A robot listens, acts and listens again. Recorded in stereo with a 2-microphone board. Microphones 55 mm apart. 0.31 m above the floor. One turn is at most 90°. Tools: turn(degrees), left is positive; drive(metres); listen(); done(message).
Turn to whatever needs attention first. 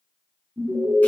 turn(degrees=-60)
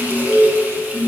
turn(degrees=-20)
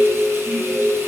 done("Found it: an alarm, straight ahead, 2 to 4 m away.")